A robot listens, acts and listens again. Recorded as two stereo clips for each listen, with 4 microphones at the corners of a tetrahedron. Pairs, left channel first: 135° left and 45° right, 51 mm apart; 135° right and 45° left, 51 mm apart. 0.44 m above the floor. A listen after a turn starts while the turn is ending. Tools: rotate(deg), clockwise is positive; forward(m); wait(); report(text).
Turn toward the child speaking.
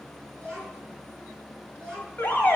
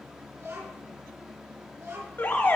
rotate(-60)
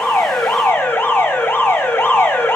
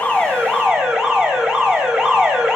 wait()
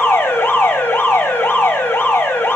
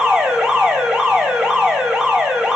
wait()
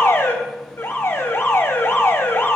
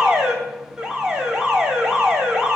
report("Facing where the child speaking came from. I can't hear it now.")